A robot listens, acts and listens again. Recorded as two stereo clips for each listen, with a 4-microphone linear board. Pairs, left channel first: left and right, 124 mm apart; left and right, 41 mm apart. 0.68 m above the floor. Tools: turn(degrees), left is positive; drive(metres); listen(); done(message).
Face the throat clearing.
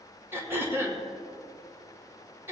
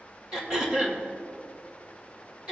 turn(degrees=-20)
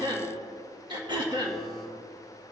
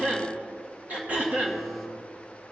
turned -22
turn(degrees=-140)
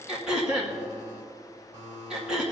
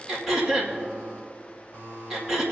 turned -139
done("Facing the throat clearing, 2 to 4 m away.")